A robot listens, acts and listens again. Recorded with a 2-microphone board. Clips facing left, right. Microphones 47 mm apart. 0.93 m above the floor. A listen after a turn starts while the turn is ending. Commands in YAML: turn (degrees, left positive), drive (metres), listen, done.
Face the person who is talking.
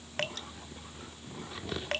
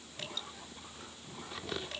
listen: true
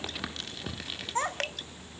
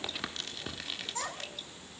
turn: 35
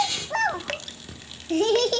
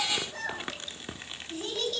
turn: 95
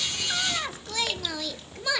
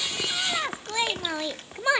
turn: -25
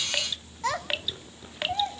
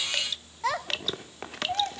done: "Found it: a child speaking, straight ahead."